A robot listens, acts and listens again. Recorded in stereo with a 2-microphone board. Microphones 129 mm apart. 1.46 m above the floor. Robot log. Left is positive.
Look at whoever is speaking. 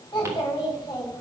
note: The child speaking: about 35° left or 145° left.
cmd yaw +35
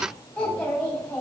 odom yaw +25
end: Facing the child speaking, over 4 m away.